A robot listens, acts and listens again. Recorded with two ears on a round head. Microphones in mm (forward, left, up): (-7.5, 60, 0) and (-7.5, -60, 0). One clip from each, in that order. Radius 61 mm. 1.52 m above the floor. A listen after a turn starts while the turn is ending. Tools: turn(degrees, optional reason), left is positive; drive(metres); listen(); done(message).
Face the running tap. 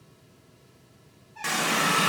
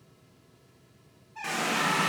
turn(degrees=35, reason="The running tap: about 35° left or 145° left.")
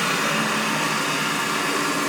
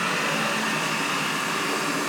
done("Found it: a running tap, straight ahead, under 1 m away.")